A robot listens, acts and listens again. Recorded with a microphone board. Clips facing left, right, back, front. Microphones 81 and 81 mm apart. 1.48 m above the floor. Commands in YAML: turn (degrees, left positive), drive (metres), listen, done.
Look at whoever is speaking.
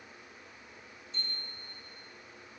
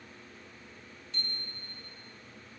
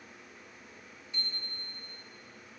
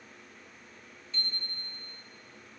listen: true
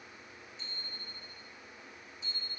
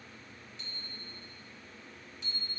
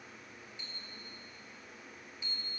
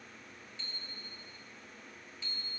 listen: true
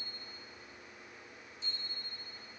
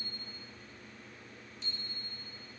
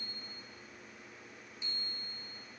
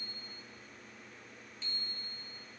done: "I can't make out anyone speaking, only a bicycle bell."